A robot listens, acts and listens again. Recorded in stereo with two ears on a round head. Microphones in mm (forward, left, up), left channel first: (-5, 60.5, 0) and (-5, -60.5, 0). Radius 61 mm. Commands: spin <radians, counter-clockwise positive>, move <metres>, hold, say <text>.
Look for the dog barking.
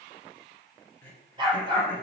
spin -0.61
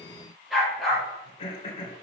say Facing the dog barking.